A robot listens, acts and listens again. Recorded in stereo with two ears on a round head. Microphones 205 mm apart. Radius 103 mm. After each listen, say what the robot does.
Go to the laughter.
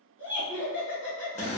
Turn 20° right.
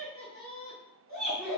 Drive 1.0 m forward.
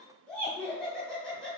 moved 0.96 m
Drive 1.0 m forward.
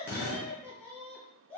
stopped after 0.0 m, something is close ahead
I am next to the laughter.